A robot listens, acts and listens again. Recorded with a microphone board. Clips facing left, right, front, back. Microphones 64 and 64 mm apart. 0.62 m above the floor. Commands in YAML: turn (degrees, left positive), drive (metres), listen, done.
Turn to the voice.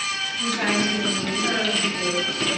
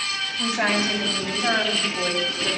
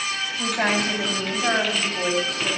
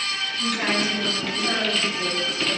turn: -35
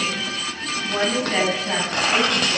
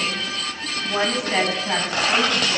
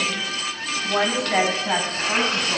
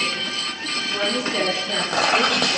turn: -10
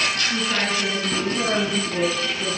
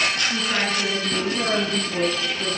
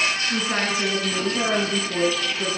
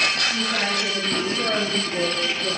done: "Facing the woman speaking."